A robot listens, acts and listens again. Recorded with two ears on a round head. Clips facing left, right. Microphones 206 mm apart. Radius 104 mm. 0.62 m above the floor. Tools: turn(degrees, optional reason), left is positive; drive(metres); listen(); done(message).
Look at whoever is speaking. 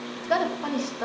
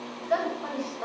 turn(degrees=60, reason="The woman speaking: about 60° left or 120° left.")
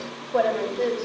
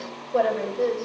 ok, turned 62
done("Found it: a woman speaking, straight ahead, 2 to 4 m away.")